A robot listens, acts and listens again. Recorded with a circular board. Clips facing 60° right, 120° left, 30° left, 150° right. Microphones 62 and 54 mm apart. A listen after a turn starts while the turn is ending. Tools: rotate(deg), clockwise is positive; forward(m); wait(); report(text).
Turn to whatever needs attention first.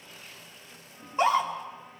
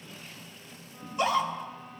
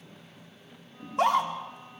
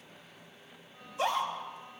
report("Facing the scream, 2 to 4 m away.")